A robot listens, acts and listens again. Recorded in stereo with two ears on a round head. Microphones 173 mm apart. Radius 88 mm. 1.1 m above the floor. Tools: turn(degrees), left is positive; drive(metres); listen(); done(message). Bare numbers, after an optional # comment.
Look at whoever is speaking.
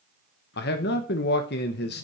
# The man speaking: about 60° left or 120° left.
turn(60)
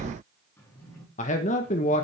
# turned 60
# So it is at 45° left.
turn(45)
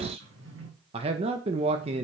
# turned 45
# The man speaking is now 35° right.
turn(-35)
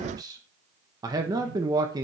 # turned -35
# The man speaking is now 20° right.
turn(-20)
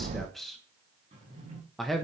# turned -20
done("Found it: a man speaking, straight ahead.")